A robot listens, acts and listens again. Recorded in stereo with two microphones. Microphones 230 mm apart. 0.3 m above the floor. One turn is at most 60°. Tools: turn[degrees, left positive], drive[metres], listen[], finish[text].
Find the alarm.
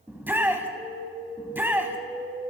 Thought: The alarm: about 40° right or 140° right.
Action: turn[-40]
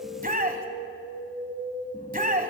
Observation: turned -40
Thought: So it is at 95° right.
Action: turn[-60]
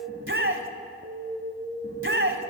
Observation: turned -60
Thought: The alarm is now 40° right.
Action: turn[-40]
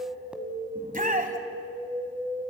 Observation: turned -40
Action: finish[Found it: an alarm, straight ahead, 1 to 2 m away.]